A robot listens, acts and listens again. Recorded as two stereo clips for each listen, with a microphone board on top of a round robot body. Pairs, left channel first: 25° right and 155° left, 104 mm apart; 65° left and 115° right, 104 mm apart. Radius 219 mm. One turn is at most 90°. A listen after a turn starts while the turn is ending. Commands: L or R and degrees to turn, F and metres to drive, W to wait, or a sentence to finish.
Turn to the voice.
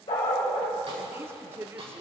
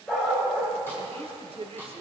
R90
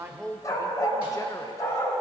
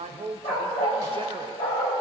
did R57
R80
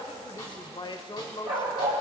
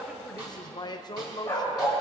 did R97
L20
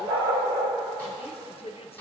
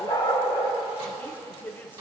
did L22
Facing the woman speaking.